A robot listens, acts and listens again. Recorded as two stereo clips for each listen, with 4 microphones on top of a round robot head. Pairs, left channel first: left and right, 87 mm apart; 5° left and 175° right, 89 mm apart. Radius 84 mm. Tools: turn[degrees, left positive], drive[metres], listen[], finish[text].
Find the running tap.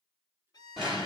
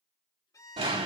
Action: listen[]
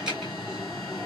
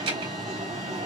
Action: listen[]
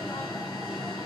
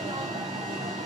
Action: finish[I can't make out a running tap, only an alarm and a violin.]